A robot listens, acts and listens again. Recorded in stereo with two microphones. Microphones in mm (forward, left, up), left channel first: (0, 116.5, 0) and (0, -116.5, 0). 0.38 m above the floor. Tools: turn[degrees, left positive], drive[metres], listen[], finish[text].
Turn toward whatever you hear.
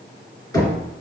Thought: The knocking: about 15° left or 165° left.
Action: turn[15]
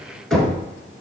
Action: finish[Found it: knocking, straight ahead, 2 to 4 m away.]